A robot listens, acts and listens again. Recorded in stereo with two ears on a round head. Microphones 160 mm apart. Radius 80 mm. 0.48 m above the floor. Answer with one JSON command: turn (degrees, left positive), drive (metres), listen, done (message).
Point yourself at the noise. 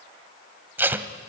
{"turn": -30}
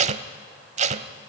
{"turn": -140}
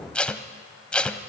{"done": "Facing the tape being pulled."}